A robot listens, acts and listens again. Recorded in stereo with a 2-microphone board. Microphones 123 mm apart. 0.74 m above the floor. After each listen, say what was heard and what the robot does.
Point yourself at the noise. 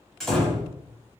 Turn 30° left.
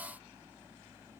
Keep listening.
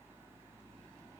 I heard a door slam, but can't make it out now. It was about 30° right or 150° left.